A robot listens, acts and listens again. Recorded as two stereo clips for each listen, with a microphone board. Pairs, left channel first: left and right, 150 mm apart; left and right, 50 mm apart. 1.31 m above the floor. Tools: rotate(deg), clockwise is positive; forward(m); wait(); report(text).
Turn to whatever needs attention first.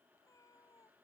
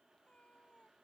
wait()
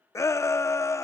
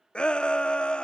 rotate(-20)
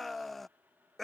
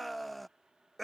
report("Facing the shout.")